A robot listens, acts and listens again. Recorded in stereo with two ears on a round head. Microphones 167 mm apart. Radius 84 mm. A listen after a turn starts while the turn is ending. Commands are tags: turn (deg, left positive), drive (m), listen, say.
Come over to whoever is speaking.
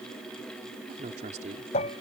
<turn deg="-40"/>
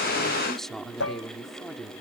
<drive m="1.0"/>
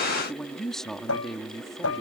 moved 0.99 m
<drive m="1.0"/>
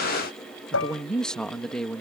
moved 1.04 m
<drive m="1.0"/>
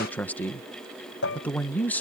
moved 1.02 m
<turn deg="10"/>
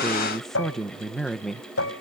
<drive m="1.0"/>
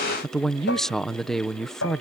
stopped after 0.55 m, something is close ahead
<say>I am next to the man speaking.</say>